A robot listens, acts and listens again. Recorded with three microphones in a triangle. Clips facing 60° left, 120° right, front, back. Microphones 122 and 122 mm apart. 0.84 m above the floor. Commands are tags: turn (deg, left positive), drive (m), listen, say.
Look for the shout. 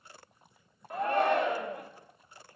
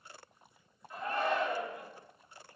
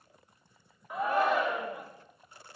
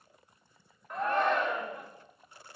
<turn deg="85"/>
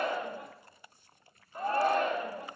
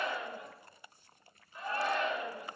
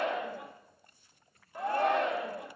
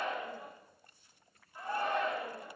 <turn deg="15"/>
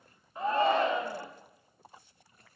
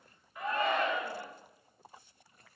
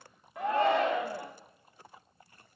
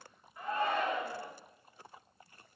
<say>Facing the shout.</say>